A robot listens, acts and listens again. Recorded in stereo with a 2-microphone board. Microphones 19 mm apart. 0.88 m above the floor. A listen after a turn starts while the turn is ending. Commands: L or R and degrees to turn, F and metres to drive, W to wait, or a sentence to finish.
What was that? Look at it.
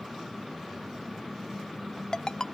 L40
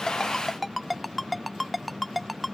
Facing the ringtone.